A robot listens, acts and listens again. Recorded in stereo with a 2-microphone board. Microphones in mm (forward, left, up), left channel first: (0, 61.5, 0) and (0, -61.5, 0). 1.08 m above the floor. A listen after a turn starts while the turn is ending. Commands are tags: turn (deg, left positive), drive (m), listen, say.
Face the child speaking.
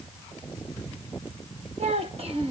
<turn deg="-50"/>
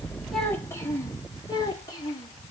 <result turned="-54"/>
<turn deg="35"/>
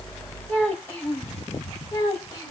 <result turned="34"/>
<turn deg="20"/>
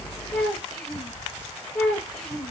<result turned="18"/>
<say>Found it: a child speaking, straight ahead, 2 to 4 m away.</say>